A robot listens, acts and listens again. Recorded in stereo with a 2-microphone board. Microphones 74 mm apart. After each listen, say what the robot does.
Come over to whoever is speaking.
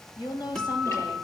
Turn 65° left.
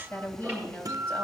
Turn 20° left.
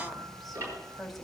Drive 1.0 m forward.
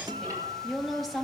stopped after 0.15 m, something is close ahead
Something is in my way. I am facing the woman speaking but have not reached it.